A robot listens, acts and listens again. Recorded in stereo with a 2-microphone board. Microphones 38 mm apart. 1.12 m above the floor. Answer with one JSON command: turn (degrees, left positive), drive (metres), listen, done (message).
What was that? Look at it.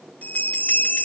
{"turn": 45}
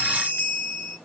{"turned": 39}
{"turn": 95}
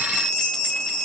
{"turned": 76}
{"turn": 20}
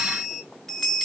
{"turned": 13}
{"done": "Found it: a bell, straight ahead."}